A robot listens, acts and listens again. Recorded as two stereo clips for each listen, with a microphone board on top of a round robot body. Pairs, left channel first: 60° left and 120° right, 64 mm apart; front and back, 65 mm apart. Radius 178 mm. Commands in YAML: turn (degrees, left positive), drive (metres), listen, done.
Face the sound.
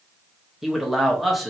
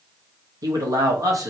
turn: 150
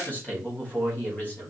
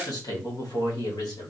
done: "Found it: a man speaking, straight ahead."